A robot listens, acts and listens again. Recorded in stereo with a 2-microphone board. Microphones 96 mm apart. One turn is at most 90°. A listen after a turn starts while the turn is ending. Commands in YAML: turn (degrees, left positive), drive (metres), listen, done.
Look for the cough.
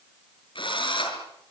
listen: true
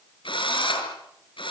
listen: true
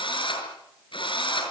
done: "I can't make out a cough to turn to."